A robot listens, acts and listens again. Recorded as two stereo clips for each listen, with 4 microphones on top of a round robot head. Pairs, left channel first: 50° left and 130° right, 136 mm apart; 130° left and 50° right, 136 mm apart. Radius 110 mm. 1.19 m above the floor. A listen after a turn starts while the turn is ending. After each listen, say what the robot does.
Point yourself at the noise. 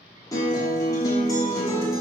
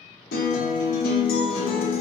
Turn 115° left.
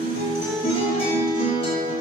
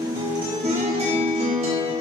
Found it: a guitar, straight ahead.